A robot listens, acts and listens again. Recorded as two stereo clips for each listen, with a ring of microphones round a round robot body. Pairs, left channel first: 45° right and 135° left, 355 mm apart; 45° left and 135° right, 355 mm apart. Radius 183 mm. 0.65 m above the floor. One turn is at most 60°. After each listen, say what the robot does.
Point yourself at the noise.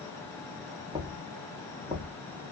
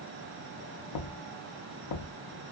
Turn 55° left.
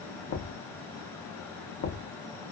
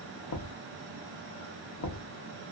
Found it: knocking, straight ahead, under 1 m away.